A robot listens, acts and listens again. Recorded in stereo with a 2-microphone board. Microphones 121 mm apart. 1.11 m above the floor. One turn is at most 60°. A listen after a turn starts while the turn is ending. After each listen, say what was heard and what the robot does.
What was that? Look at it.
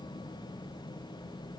Keep listening.
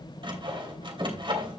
The sawing: about 45° right or 135° right. Turn 45° right.
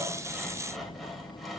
Facing the sawing, 2 to 4 m away.